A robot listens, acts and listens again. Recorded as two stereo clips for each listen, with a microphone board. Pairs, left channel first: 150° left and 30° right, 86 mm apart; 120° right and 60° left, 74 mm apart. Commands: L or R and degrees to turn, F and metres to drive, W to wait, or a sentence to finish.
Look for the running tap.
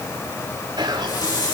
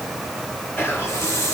R170
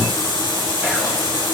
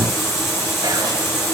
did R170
R65
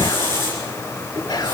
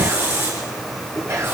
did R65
Found it: a running tap, straight ahead, over 4 m away.